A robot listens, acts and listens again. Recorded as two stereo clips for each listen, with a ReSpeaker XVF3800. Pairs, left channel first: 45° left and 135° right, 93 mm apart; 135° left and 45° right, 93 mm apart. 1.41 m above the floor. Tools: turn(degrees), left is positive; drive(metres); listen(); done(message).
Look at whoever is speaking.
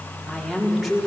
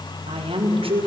turn(degrees=-45)
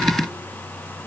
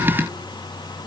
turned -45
listen()
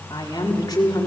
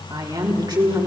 done("Found it: a woman speaking, straight ahead, over 4 m away.")